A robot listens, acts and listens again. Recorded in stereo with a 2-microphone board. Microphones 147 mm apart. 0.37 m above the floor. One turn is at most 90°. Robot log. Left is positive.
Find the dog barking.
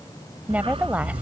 note: The dog barking: about 40° right or 140° right.
cmd yaw -40
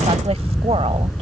end: Found it: a dog barking, straight ahead.